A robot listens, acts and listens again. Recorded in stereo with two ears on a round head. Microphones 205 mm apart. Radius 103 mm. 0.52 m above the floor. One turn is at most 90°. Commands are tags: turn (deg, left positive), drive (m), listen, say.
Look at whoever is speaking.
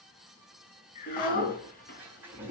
<turn deg="40"/>
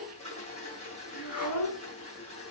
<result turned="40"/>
<turn deg="90"/>
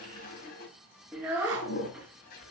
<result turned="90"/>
<turn deg="-10"/>
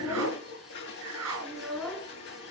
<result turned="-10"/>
<say>Found it: a child speaking, straight ahead.</say>